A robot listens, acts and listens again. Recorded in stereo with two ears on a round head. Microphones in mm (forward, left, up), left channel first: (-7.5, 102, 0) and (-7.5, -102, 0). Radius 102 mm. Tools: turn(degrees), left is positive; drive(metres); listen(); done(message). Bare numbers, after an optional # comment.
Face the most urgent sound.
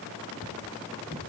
listen()
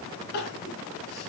# The crying: about 45° left or 135° left.
turn(45)
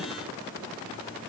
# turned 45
listen()
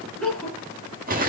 done("Facing the crying.")